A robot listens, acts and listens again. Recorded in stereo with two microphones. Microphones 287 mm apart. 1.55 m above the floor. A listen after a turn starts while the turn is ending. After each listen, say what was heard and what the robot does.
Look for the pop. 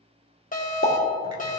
The pop: about 45° left or 135° left. Turn 45° left.
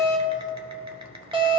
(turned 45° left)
Keep listening.
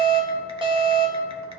I heard a pop, but can't make it out now. It was about straight ahead or 90° left.